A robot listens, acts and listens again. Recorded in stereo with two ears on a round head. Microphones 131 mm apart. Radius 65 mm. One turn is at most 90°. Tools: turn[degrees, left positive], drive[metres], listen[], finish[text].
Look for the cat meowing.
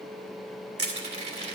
Action: listen[]
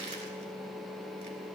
Action: listen[]
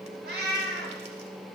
Action: turn[-90]
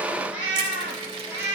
Thought: So it is at 15° right.
Action: turn[-15]
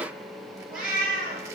Action: finish[Found it: a cat meowing, straight ahead.]